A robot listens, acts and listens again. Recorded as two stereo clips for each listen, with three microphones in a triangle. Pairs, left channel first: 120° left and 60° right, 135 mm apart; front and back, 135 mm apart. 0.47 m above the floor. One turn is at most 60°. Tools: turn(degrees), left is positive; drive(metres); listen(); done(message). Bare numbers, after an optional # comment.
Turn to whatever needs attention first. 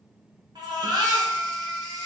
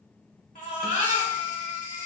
done("Found it: a baby crying, straight ahead.")